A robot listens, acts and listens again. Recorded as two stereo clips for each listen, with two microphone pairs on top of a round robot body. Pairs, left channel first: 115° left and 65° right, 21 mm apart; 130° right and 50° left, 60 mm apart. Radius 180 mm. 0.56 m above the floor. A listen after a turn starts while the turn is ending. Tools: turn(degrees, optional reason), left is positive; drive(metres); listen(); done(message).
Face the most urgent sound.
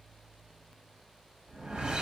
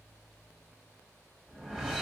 listen()
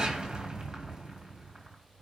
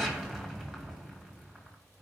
listen()
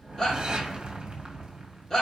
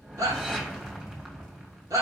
turn(degrees=50, reason="The shout: 50° left.")
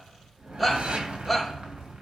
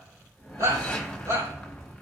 turn(degrees=20, reason="The shout is now 20° left.")
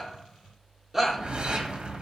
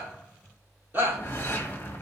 done("Found it: a shout, straight ahead, 2 to 4 m away.")